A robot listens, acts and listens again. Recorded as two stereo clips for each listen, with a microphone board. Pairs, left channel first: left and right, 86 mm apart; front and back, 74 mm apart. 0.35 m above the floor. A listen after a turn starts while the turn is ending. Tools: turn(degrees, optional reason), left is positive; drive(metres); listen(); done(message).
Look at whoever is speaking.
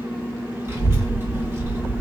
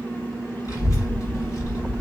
turn(degrees=-35, reason="The child speaking: 35° right.")
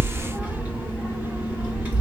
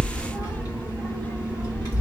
turn(degrees=-20, reason="The child speaking is now 20° right.")
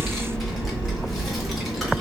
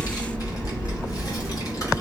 done("Facing the child speaking, 1 to 2 m away.")